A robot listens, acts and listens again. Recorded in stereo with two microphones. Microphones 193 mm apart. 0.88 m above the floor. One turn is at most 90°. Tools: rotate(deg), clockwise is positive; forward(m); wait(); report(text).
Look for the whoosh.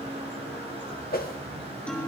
rotate(-50)
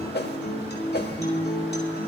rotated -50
rotate(-70)
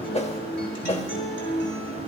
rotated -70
rotate(-35)
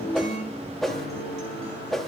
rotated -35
report("Facing the whoosh, 1 to 2 m away.")